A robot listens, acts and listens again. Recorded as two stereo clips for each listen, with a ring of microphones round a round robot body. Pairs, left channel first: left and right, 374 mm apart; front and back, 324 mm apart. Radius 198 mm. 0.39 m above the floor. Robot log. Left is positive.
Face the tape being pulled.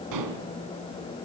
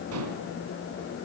cmd idle
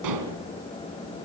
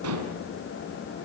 cmd idle
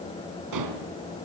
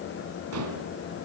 end: I can't make out tape being pulled to turn to.